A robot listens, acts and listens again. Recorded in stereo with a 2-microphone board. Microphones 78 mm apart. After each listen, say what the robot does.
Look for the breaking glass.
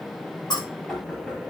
Turn 60° left.
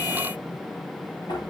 Keep listening.
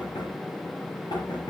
I heard breaking glass, but can't make it out now. It was about straight ahead or 60° left.